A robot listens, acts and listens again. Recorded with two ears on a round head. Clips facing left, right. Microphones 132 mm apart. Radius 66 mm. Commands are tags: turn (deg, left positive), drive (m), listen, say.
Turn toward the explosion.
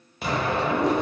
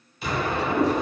<turn deg="45"/>
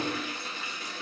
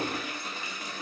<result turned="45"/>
<listen/>
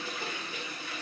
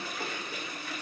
<say>I heard an explosion, but can't make it out now. It was about straight ahead or 90° left.</say>